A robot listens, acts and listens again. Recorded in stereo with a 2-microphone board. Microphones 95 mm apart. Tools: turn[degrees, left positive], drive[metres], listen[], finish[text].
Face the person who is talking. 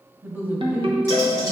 Thought: The woman speaking: about 20° right or 160° right.
Action: turn[-20]
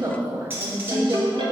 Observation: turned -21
Thought: So it is at 140° right.
Action: turn[-140]
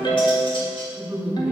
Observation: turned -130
Thought: The woman speaking is now 15° right.
Action: turn[-15]
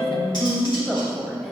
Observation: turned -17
Action: finish[Found it: a woman speaking, straight ahead, 1 to 2 m away.]